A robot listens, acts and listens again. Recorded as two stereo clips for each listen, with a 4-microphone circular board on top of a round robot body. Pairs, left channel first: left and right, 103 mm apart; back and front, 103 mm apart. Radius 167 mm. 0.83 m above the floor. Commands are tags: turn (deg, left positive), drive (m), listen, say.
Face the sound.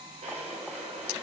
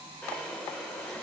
<turn deg="-100"/>
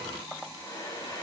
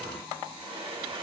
<turn deg="35"/>
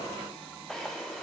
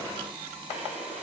<say>Facing the drawer.</say>